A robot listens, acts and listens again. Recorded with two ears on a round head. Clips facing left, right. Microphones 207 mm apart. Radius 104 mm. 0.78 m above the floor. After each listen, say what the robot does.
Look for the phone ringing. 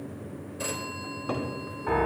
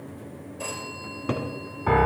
Turn 25° left.
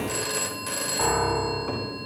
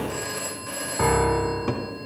Turn 130° left.
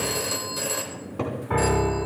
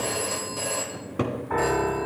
Turn 30° left.
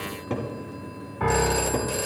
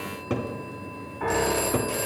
Turn 15° left.
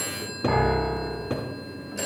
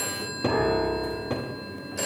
Found it: a phone ringing, straight ahead, 2 to 4 m away.